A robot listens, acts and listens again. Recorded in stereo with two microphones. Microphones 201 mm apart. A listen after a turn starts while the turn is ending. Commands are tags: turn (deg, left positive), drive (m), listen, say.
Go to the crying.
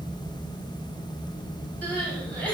<turn deg="30"/>
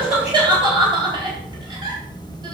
<turn deg="-20"/>
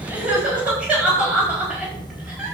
<drive m="1.0"/>
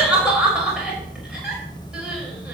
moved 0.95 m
<drive m="1.0"/>
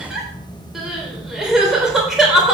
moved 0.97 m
<drive m="1.0"/>
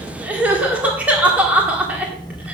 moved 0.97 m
<turn deg="-10"/>
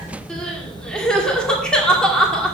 <drive m="1.0"/>
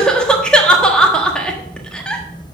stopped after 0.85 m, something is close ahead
<say>I am next to the crying.</say>